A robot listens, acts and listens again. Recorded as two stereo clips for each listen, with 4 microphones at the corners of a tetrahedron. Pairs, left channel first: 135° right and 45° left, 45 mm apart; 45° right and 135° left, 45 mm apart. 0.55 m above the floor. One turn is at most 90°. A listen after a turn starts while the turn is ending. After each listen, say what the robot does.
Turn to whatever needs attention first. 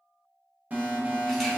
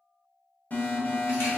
Facing the alarm, 1 to 2 m away.